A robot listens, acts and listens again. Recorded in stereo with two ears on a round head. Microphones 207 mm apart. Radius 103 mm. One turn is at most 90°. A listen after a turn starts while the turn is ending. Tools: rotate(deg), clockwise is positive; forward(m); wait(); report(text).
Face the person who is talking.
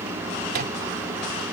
wait()
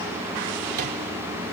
wait()
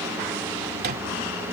report("I can't make out anyone speaking.")